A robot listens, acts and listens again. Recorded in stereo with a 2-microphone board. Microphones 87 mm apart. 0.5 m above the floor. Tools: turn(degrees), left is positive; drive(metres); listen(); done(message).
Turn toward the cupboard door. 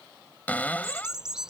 turn(degrees=15)
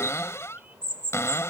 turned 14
turn(degrees=150)
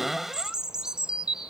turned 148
done("Facing the cupboard door.")